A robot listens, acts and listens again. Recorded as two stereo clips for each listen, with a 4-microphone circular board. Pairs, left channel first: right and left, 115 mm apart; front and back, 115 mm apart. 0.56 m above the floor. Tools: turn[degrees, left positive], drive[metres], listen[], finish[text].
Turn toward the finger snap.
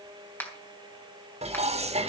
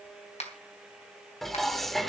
Thought: The finger snap: 15° right.
Action: turn[-15]
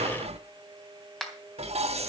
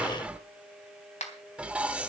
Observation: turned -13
Action: finish[Found it: a finger snap, straight ahead.]